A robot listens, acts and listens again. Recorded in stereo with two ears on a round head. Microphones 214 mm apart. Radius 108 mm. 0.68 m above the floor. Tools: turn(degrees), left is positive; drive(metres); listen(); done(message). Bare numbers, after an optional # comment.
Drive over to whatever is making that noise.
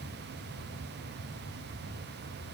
listen()
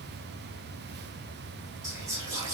turn(-30)
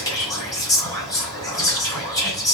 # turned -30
# So it is at 15° left.
turn(15)
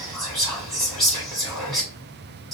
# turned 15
drive(1.0)
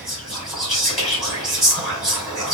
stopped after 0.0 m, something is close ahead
done("Something is in my way. I am facing the whispering but have not reached it.")